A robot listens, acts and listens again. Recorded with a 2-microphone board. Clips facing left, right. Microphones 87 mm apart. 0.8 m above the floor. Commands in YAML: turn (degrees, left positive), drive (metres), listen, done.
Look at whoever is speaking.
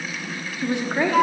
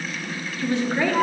turn: 15
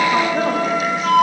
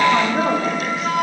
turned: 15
done: "Found it: a woman speaking, straight ahead, 1 to 2 m away."